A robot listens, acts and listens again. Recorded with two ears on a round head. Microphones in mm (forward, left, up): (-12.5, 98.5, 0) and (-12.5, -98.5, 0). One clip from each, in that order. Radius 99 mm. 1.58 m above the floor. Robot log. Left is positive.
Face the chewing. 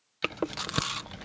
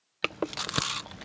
cmd yaw -30
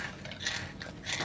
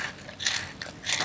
note: So it is at 135° right.
cmd yaw -135
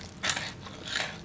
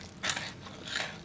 end: Facing the chewing.